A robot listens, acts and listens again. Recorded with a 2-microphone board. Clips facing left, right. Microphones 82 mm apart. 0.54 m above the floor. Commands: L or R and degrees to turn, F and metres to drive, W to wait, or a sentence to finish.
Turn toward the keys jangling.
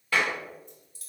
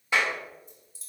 L60
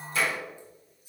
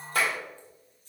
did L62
L10
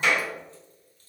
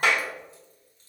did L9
W
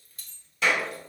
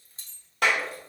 R30
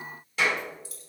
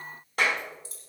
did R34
R30
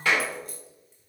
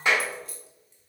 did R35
Found it: keys jangling, straight ahead, 1 to 2 m away.